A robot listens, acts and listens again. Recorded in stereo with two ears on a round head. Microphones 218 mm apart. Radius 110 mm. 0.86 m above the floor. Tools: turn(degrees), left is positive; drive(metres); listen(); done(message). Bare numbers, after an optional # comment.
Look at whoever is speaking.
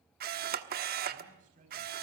# The man speaking: about 30° right or 150° right.
turn(-30)
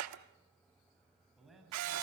done("Found it: a man speaking, straight ahead.")